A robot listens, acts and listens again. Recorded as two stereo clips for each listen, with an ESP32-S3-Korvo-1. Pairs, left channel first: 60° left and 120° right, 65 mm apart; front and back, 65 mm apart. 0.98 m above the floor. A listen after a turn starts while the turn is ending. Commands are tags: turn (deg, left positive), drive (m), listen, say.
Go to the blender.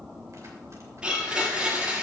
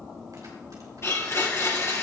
<turn deg="-45"/>
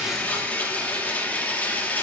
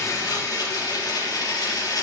<drive m="1.0"/>
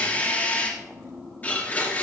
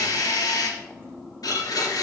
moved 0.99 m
<drive m="1.0"/>
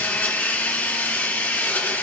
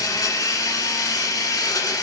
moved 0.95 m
<drive m="1.0"/>
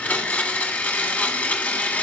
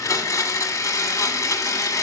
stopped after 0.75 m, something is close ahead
<say>Arrived at the blender, straight ahead.</say>